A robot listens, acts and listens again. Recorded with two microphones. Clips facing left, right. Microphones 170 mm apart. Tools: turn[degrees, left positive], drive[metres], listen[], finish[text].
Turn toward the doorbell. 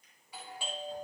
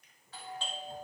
Action: turn[30]
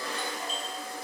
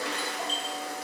Action: listen[]
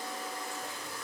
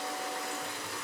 Action: listen[]
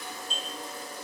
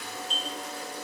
Thought: So it is at 135° left.
Action: turn[135]
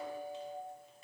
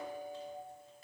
Thought: The doorbell is now 20° left.
Action: turn[20]
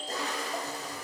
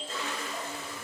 Action: finish[Facing the doorbell, 2 to 4 m away.]